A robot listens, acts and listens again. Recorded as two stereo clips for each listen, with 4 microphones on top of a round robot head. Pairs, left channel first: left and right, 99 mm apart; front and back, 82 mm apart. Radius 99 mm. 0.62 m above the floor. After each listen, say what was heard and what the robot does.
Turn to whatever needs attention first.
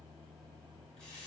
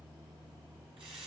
Keep listening.
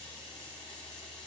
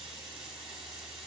Keep listening.
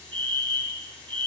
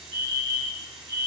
The fire alarm: 60° right. Turn 60° right.
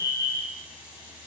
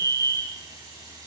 The fire alarm is now 25° right. Turn 25° right.
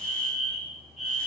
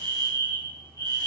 Found it: a fire alarm, straight ahead.